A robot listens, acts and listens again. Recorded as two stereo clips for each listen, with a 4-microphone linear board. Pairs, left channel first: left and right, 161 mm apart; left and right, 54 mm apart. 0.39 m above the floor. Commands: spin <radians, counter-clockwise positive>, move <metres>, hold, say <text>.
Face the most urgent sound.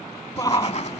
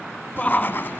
spin 0.35
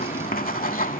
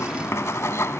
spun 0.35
hold
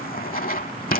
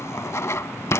hold
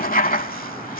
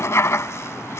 say I heard a shout, but can't make it out now. It was about straight ahead or 140° left.